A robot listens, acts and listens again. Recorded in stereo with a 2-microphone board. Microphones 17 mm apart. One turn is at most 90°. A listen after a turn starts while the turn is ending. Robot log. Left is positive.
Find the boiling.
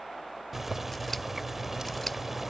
cmd yaw -30
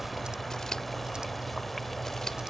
note: So it is at 15° left.
cmd yaw +15
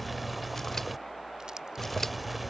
end: Facing the boiling.